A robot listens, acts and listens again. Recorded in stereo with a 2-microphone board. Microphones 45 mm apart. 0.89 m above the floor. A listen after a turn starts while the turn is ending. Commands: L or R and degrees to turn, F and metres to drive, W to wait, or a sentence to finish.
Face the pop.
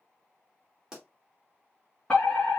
R15
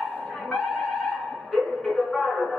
W
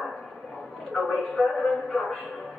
I heard a pop, but can't make it out now. It was about straight ahead or 150° right.